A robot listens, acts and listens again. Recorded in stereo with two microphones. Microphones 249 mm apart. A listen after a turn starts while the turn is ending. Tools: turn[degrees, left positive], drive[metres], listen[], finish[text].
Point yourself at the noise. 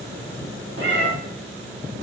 Thought: The cat meowing: about 50° right or 130° right.
Action: turn[-50]
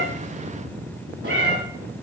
Thought: So it is at 75° right.
Action: turn[-75]
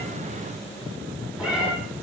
Action: finish[Facing the cat meowing, 1 to 2 m away.]